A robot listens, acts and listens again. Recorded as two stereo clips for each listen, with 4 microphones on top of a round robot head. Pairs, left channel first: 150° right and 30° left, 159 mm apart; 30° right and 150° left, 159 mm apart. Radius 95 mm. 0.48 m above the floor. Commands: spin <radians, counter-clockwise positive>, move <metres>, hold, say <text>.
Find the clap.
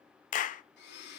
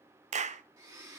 spin -3.05
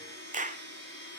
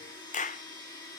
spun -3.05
say Facing the clap, under 1 m away.